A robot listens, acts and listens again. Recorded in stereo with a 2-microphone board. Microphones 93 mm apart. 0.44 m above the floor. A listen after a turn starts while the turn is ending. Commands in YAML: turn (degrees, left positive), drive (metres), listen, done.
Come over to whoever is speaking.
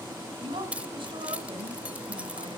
turn: -70
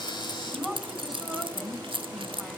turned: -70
drive: 1.0
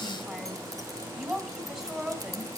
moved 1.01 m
turn: -10
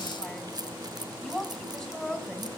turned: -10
drive: 1.0
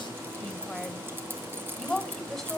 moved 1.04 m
drive: 1.0
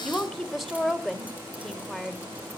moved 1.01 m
drive: 1.0
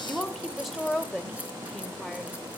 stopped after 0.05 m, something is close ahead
done: "Arrived at the woman speaking, straight ahead."